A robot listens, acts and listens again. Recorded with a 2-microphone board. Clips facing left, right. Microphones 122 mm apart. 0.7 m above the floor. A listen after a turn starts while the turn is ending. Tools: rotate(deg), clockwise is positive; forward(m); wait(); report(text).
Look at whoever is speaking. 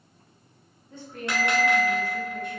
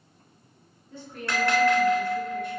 rotate(-50)
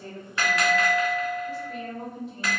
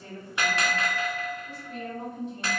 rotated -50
report("Facing the woman speaking, 1 to 2 m away.")